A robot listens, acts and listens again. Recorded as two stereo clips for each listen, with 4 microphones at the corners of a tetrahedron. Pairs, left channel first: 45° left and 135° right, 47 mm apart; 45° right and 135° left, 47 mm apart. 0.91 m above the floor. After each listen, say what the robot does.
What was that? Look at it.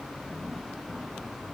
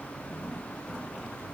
Keep listening.
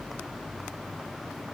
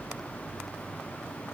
Keep listening.
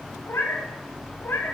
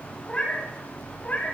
Turn 10° left.
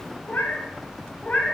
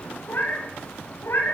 Turn 20° right.
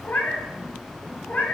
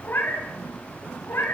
Turn 10° right.
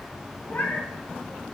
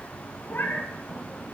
Facing the cat meowing.